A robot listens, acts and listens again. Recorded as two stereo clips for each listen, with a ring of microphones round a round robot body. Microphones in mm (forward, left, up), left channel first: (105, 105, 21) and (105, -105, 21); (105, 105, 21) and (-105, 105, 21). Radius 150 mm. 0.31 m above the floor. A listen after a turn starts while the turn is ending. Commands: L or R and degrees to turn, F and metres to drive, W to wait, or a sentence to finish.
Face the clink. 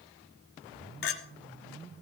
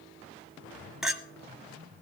L95
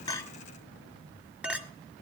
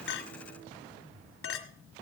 Found it: a clink, straight ahead, 1 to 2 m away.